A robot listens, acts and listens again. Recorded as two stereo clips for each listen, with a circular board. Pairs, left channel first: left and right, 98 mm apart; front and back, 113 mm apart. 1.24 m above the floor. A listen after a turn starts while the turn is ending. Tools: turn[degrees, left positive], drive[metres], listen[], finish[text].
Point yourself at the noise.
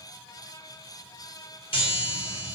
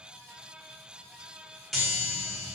Thought: The chime: 90° left.
Action: turn[90]
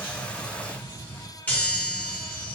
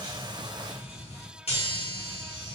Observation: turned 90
Thought: The chime is now 15° left.
Action: turn[15]
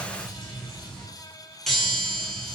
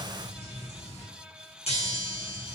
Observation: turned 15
Action: finish[Facing the chime, under 1 m away.]